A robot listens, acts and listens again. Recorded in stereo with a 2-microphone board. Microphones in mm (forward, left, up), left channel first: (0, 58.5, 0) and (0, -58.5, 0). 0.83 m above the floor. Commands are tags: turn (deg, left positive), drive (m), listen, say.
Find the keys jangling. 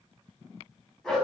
<listen/>
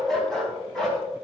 <listen/>
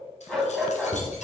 <turn deg="90"/>
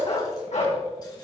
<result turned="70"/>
<turn deg="20"/>
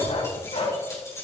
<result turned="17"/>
<turn deg="25"/>
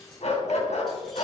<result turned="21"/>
<listen/>
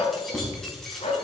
<say>Found it: keys jangling, straight ahead.</say>